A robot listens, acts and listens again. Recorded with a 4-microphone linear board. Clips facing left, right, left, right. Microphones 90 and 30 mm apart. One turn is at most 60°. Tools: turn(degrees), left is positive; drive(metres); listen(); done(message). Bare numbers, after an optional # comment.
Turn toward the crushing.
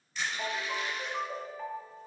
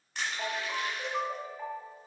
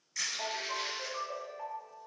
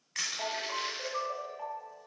# The crushing: about 70° right or 110° right.
turn(-60)
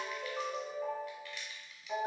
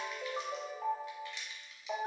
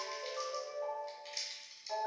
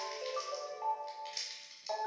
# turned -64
# So it is at 25° right.
turn(-25)
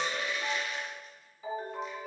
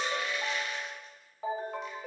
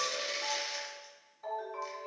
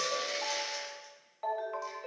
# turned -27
listen()
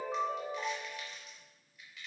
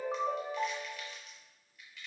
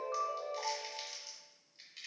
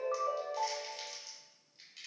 done("Facing the crushing.")